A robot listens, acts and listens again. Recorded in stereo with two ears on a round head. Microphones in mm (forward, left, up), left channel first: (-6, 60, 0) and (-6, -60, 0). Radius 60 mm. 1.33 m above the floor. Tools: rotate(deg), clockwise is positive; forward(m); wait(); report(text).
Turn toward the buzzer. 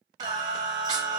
wait()
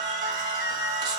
wait()
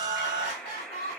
rotate(-30)
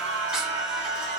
wait()
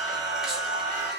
wait()
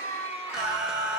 report("I heard a buzzer, but can't make it out now. It was about 25° right or 145° left.")